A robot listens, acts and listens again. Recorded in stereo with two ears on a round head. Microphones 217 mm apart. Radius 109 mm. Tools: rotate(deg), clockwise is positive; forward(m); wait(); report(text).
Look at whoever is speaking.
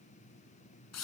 wait()
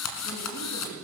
rotate(-40)
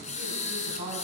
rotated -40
rotate(-110)
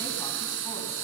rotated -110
wait()
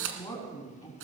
rotate(-15)
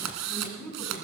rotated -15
report("Found it: a woman speaking, straight ahead.")